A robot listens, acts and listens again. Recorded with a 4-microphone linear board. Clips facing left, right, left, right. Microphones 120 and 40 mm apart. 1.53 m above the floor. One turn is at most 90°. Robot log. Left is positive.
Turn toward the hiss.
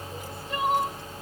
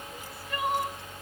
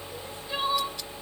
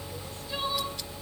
cmd idle
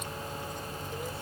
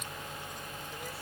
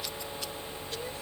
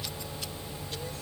cmd idle
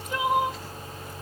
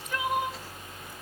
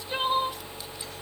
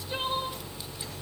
end: I can't make out a hiss, only crying.